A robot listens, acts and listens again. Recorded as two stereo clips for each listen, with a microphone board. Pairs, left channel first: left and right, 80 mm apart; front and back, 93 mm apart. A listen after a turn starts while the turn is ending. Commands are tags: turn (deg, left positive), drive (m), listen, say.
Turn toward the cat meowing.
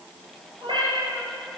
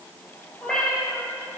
<turn deg="-85"/>
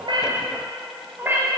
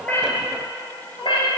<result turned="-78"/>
<turn deg="-30"/>
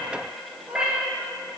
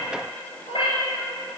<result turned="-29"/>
<turn deg="-15"/>
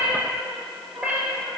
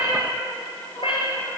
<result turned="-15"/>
<turn deg="-15"/>
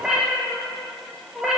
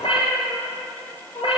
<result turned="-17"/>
<say>Facing the cat meowing.</say>